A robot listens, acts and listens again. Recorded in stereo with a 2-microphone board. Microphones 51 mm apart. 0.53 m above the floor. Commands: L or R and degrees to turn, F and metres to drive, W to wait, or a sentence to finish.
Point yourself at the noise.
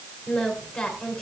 L20
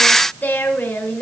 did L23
L135
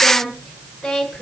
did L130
Facing the singing, over 4 m away.